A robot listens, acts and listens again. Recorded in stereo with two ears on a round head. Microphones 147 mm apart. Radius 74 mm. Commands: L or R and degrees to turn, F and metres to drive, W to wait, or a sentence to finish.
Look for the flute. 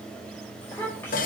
W
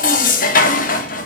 W
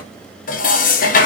I can't make out a flute, only dishes clattering and a child speaking.